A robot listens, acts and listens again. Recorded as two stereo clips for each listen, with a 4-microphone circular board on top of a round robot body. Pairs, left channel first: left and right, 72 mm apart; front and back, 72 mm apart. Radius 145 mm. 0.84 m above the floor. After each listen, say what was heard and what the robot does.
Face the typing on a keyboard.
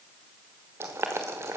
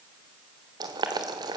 Keep listening.
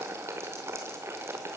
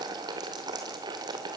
Keep listening.
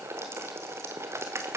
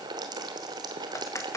The typing on a keyboard: 45° right. Turn 45° right.
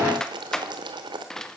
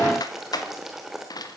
The typing on a keyboard is now 10° left. Turn 10° left.
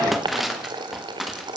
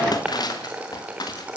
Found it: typing on a keyboard, straight ahead.